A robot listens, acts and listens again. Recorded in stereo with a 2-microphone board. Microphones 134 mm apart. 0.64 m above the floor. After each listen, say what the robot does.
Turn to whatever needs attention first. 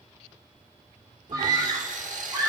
Turn 30° right.
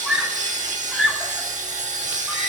Facing the scream, 2 to 4 m away.